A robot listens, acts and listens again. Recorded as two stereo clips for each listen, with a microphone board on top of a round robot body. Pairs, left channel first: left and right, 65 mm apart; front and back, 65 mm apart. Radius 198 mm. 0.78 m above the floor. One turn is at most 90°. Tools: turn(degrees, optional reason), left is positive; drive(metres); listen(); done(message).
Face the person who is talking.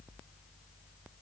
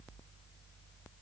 listen()
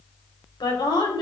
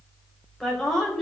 turn(degrees=85, reason="The woman speaking: 85° left.")
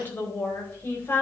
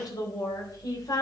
turn(degrees=30, reason="The woman speaking is now 30° left.")
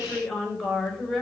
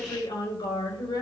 done("Found it: a woman speaking, straight ahead, over 4 m away.")